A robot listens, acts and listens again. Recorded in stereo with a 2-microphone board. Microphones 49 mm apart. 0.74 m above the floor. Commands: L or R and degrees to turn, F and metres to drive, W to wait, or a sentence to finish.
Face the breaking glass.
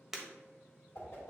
R30
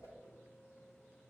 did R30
W
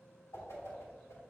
I heard breaking glass, but can't make it out now. It was about 25° left or 145° right.